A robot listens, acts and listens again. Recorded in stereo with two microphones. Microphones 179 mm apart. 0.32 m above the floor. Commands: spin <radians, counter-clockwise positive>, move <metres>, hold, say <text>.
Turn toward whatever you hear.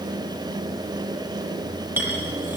spin -0.52
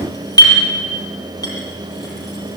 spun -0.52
spin 0.35
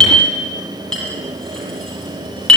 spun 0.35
say Found it: a clink, straight ahead.